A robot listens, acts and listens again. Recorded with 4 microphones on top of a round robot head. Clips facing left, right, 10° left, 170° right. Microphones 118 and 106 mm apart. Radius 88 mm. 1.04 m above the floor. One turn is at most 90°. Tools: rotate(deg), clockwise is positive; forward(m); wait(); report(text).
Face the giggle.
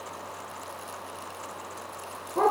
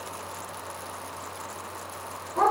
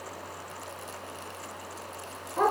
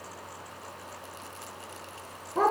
wait()
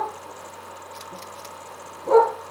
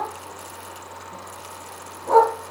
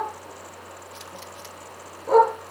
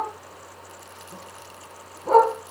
wait()
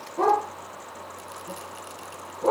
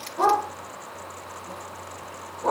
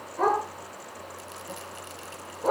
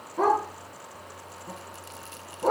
report("I can't make out a giggle to turn to.")